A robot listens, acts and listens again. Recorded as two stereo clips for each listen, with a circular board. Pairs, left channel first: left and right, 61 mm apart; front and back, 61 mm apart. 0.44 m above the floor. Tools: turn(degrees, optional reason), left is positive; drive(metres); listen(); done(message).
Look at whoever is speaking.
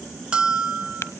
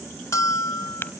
listen()
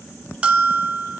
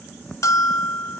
listen()
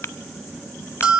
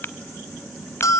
done("I can't make out anyone speaking, only a bell.")